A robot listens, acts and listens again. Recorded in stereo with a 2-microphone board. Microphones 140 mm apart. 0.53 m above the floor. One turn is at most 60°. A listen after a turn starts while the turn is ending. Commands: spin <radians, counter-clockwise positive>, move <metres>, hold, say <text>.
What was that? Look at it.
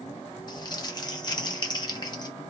spin 0.61
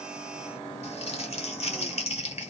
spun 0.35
spin 1.05
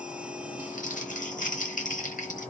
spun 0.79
spin 1.05
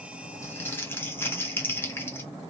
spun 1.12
spin 0.26
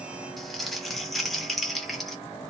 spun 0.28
say Found it: crumpling, straight ahead, under 1 m away.